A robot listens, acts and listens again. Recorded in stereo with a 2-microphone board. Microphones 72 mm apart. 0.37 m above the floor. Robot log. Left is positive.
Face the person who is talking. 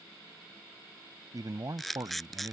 note: The man speaking: about 55° right or 125° right.
cmd yaw -55
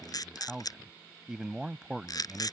note: So it is at 10° right.
cmd yaw -10
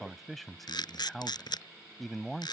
end: Found it: a man speaking, straight ahead.